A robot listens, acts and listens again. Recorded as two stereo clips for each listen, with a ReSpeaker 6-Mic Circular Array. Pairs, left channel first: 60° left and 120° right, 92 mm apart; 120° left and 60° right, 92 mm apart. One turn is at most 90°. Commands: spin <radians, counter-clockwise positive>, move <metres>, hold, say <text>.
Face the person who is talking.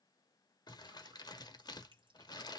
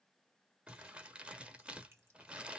hold
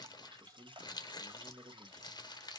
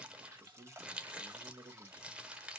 spin -1.22
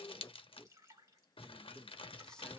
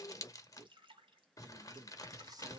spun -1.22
spin -0.35
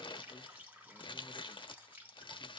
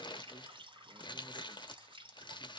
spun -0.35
hold
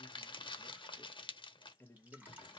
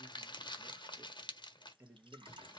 say Facing the man speaking, 1 to 2 m away.